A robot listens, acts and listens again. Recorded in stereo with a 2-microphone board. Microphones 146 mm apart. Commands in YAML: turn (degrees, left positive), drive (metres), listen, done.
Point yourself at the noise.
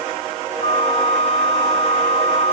turn: 45
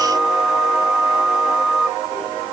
done: "Found it: a flute, straight ahead."